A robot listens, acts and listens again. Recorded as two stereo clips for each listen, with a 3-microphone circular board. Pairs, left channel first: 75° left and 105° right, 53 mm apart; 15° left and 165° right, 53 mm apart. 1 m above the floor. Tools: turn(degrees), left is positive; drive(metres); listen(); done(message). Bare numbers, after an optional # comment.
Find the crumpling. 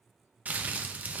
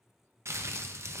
# The crumpling: 160° right.
turn(-160)
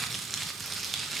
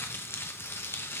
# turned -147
# The crumpling is now 15° right.
turn(-15)
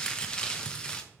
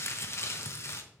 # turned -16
done("Facing the crumpling, under 1 m away.")